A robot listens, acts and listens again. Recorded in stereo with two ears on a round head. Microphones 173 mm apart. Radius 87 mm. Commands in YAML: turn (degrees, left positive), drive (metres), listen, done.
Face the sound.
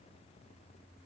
listen: true
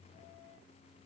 listen: true
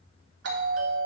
turn: -65
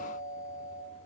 turn: -10
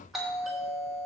done: "Facing the doorbell, 2 to 4 m away."